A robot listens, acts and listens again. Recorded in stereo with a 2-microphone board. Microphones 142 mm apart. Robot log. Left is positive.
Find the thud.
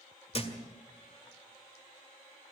note: The thud: about 40° left or 140° left.
cmd yaw +40
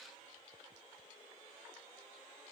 cmd idle
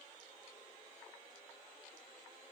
end: I heard a thud, but can't make it out now. It was about straight ahead or 100° left.